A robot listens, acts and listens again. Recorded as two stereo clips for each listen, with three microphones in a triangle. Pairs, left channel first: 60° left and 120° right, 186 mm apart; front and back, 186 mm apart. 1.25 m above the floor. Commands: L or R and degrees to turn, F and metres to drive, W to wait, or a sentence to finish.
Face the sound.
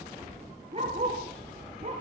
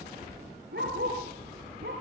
R170
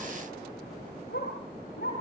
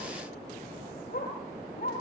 L35
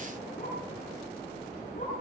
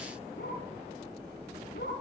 L15
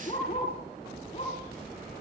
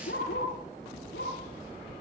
Found it: a dog barking, straight ahead, over 4 m away.